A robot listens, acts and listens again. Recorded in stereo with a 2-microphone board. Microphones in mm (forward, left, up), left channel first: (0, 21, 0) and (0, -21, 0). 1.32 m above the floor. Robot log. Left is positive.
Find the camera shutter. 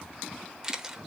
note: The camera shutter: about 15° right or 165° right.
cmd yaw -15
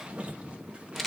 end: Facing the camera shutter, under 1 m away.